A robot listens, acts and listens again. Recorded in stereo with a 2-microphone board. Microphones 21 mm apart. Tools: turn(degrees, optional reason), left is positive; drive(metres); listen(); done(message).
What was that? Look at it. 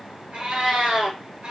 turn(degrees=-60, reason="The cat meowing: about 60° right or 120° right.")
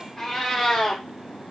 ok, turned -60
turn(degrees=25, reason="So it is at 25° left.")
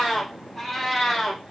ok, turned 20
turn(degrees=20, reason="The cat meowing is now 20° left.")
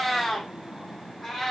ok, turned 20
turn(degrees=10, reason="The cat meowing is now 10° left.")
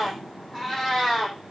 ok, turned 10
done("Found it: a cat meowing, straight ahead, 2 to 4 m away.")